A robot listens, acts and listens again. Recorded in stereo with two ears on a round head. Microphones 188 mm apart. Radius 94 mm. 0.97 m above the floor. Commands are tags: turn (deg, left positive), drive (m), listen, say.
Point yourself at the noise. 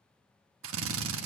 <turn deg="-70"/>
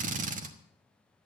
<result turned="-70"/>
<turn deg="-40"/>
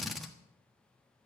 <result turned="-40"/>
<say>Found it: a drill, straight ahead, 1 to 2 m away.</say>